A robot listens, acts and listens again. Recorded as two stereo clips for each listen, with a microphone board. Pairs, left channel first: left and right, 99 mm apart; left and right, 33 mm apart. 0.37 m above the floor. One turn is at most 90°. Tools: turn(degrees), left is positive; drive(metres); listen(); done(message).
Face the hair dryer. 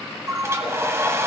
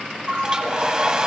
turn(degrees=-25)
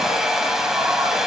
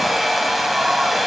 done("Facing the hair dryer, 1 to 2 m away.")